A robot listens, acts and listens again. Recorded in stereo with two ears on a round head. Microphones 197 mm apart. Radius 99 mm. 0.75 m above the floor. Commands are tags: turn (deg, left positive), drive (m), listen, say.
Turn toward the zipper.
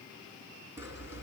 <listen/>
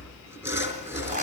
<turn deg="-35"/>
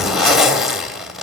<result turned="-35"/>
<say>Facing the zipper.</say>